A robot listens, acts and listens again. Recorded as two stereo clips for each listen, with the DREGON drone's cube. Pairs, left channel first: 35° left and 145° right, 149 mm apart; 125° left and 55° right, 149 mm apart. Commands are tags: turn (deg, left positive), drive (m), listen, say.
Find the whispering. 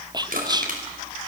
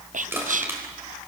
<turn deg="-85"/>
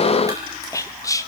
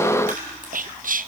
<turn deg="-35"/>
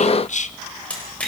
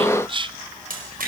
<say>Found it: whispering, straight ahead.</say>